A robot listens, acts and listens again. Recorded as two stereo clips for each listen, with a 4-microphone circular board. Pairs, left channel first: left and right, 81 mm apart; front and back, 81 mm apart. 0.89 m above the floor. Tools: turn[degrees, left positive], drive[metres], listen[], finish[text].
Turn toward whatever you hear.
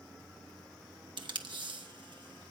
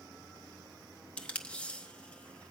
Thought: The tape being pulled: 75° right.
Action: turn[-75]
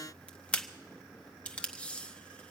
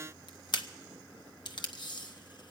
Thought: The tape being pulled is now 15° left.
Action: turn[15]
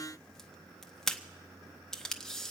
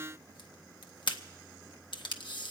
Action: finish[Facing the tape being pulled, under 1 m away.]